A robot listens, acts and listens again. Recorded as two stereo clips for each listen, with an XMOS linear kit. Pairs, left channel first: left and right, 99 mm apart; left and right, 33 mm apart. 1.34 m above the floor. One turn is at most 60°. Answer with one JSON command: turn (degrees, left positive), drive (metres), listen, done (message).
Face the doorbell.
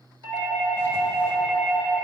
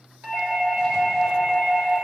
{"turn": -60}
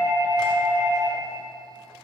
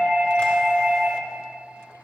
{"turn": -25}
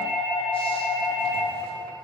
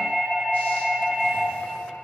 {"turn": -10}
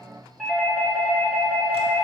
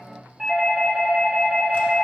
{"done": "Facing the doorbell, 1 to 2 m away."}